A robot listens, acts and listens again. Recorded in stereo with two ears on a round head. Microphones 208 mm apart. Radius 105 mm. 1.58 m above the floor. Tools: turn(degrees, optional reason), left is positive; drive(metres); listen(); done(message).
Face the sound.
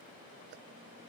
listen()
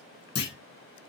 turn(degrees=45, reason="The clunk: about 45° left or 135° left.")
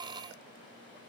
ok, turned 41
listen()
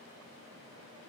done("I heard a clunk, but can't make it out now. It was about 5° left or 90° left.")